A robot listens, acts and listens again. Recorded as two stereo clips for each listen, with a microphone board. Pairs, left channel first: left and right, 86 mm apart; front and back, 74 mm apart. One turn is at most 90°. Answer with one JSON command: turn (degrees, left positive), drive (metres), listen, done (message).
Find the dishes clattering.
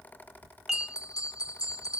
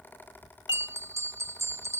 {"done": "Found it: dishes clattering, straight ahead."}